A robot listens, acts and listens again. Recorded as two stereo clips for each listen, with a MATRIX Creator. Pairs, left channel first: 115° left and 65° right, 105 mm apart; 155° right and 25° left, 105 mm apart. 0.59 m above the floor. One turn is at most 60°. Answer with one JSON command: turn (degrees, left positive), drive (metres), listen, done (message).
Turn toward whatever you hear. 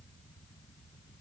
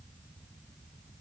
{"listen": true}
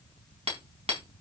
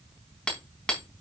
{"turn": -60}
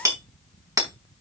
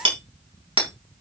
{"turn": -10}
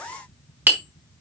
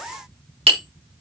{"done": "Facing the hammering."}